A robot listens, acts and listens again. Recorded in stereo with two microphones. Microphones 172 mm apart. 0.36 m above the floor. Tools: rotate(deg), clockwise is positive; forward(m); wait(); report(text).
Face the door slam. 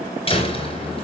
rotate(-35)
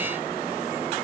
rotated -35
wait()
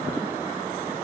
report("I heard a door slam, but can't make it out now. It was about straight ahead or 110° left.")